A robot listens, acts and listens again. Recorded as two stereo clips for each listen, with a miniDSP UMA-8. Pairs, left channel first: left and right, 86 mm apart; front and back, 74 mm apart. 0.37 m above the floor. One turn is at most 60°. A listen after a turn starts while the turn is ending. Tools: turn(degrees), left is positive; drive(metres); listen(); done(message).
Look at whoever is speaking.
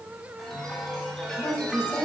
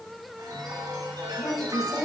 turn(degrees=30)
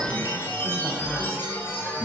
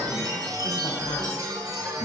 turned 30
listen()
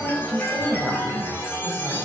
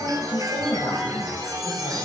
turn(degrees=10)
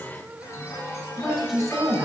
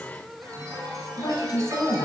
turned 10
done("Facing the woman speaking.")